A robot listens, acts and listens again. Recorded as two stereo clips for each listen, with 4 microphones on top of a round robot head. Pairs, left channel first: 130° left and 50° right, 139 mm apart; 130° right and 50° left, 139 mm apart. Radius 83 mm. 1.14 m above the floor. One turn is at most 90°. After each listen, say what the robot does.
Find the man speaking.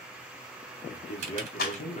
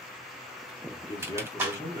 Turn 90° left.
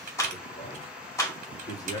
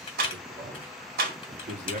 Turn 70° left.
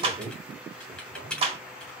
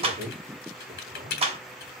Facing the man speaking, 2 to 4 m away.